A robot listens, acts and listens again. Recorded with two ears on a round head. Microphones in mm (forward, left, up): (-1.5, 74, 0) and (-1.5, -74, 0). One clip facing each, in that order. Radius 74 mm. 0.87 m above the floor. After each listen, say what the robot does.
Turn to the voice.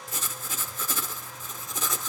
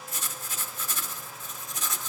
Keep listening.
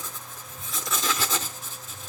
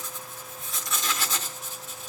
Keep listening.
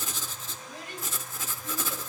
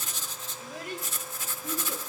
Turn 50° right.
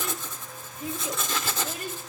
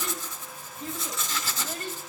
Turn 10° left.
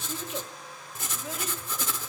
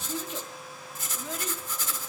Facing the child speaking.